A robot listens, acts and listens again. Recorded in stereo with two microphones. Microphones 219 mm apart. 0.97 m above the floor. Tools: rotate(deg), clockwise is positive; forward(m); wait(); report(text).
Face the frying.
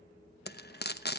rotate(-50)
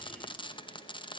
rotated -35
rotate(-25)
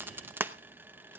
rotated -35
rotate(10)
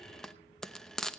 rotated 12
report("Found it: frying, straight ahead, under 1 m away.")